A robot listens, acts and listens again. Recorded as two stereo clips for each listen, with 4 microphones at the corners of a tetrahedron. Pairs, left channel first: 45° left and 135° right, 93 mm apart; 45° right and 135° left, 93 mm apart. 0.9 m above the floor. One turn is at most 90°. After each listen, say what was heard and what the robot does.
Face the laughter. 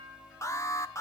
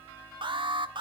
Keep listening.
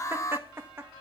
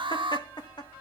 The laughter: 75° right. Turn 75° right.
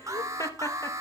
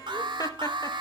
Found it: laughter, straight ahead, 1 to 2 m away.